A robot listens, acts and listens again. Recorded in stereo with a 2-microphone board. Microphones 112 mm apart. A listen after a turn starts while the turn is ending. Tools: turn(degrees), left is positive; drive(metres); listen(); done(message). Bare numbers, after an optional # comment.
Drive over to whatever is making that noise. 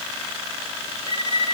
# The violin: about 60° right or 120° right.
turn(-60)
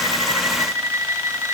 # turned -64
# So it is at 30° right.
turn(-30)
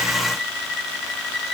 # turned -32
drive(1.0)
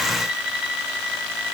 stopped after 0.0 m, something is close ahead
done("Blocked. The violin is further on, straight ahead.")